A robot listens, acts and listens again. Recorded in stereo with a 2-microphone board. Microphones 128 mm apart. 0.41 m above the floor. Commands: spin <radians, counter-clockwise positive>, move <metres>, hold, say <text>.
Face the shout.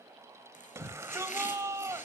spin -0.35
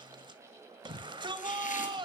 spin -2.36
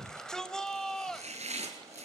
say Found it: a shout, straight ahead.